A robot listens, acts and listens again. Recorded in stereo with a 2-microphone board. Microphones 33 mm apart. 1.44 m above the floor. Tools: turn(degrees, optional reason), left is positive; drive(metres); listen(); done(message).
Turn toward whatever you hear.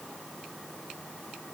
listen()
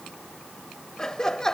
turn(degrees=15, reason="The laughter: about 15° left or 165° left.")
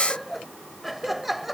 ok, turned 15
turn(degrees=-30)
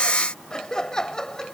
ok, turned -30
turn(degrees=20, reason="So it is at 20° left.")
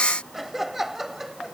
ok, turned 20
turn(degrees=-10, reason="The laughter is now 10° right.")
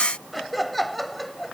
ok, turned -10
done("Facing the laughter.")